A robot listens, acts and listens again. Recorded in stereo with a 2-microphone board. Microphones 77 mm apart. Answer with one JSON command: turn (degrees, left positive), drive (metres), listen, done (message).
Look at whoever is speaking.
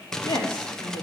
{"turn": 90}
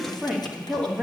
{"done": "Facing the woman speaking."}